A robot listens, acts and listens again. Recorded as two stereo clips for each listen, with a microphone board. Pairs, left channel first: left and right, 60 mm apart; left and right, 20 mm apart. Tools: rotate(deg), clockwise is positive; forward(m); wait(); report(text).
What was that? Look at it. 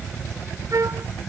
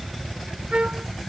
rotate(65)
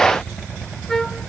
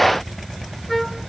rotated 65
report("Found it: a trumpet, straight ahead.")